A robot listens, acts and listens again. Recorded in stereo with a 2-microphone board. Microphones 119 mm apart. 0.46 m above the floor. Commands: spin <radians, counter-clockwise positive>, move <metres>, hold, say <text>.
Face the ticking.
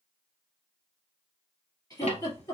spin 1.22
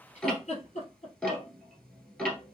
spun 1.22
spin 0.17
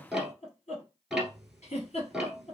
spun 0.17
say Facing the ticking, 1 to 2 m away.